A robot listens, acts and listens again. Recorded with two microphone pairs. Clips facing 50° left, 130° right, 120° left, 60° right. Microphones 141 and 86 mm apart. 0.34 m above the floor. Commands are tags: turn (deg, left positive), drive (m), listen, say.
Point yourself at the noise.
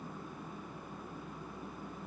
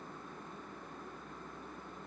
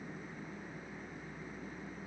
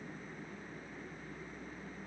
<listen/>
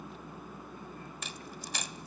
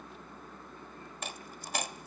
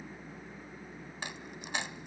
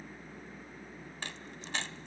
<turn deg="-165"/>
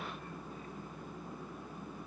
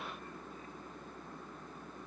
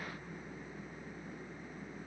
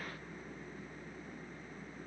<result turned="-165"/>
<say>I heard a dropped coin from this way, but can't make it out now.</say>